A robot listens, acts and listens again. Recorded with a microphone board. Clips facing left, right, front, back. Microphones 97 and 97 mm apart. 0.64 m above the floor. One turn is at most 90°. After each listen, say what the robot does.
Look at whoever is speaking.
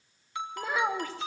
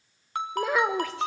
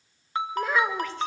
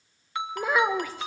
Turn 90° right.
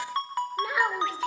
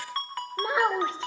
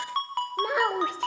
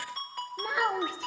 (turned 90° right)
Turn 30° right.
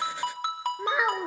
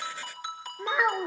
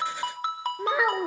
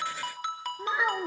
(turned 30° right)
Found it: a child speaking, straight ahead.